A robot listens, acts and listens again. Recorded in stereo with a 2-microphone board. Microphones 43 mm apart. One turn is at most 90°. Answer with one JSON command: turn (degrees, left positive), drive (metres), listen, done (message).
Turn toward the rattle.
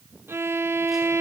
{"listen": true}
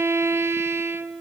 {"listen": true}
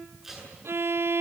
{"done": "I can't make out a rattle, only a violin and tape being pulled."}